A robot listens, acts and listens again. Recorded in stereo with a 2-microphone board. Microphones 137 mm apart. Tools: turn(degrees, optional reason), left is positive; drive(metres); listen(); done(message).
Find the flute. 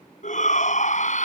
listen()
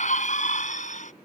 listen()
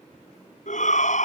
done("I can't make out a flute to turn to.")